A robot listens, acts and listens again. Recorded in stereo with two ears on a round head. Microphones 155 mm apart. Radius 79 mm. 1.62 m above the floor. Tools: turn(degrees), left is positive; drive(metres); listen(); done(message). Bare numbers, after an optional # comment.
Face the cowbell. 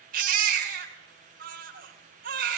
listen()
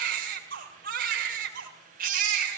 listen()
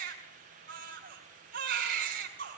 done("I can't make out a cowbell to turn to.")